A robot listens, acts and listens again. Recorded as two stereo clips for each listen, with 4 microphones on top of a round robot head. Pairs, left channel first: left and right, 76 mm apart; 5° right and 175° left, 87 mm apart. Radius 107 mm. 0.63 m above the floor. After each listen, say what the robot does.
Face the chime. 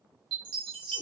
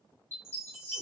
Turn 75° right.
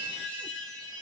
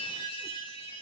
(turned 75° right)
Turn 20° left.
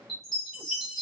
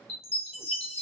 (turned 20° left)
Found it: a chime, straight ahead, under 1 m away.